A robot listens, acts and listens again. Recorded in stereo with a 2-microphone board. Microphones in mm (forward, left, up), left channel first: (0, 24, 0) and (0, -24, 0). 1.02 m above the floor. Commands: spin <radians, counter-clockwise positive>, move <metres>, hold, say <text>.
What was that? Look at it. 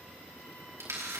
spin -1.57
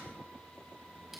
hold
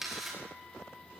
say Facing the camera shutter, over 4 m away.